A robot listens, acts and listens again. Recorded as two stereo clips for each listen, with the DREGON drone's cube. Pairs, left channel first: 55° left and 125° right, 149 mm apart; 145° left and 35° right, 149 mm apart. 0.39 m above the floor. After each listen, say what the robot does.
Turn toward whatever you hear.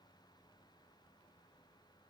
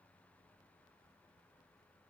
Keep listening.
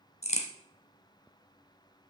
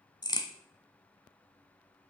Turn 90° left.
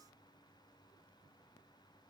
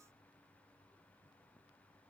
Facing where the crack came from. I can't hear it now.